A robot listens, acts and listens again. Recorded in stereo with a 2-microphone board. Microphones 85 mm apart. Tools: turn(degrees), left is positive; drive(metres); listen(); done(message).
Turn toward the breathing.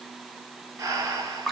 turn(degrees=-40)
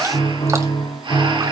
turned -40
listen()
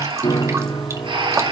turn(degrees=-100)
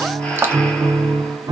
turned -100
listen()
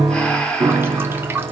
turn(degrees=15)
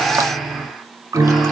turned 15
done("Facing the breathing.")